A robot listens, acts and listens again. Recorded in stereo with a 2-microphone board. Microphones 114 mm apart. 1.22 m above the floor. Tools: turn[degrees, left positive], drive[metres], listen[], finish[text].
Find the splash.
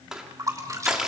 Thought: The splash: about 30° right or 150° right.
Action: turn[-30]
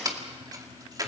Action: listen[]
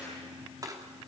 Action: finish[I heard a splash, but can't make it out now. It was about straight ahead or 120° right.]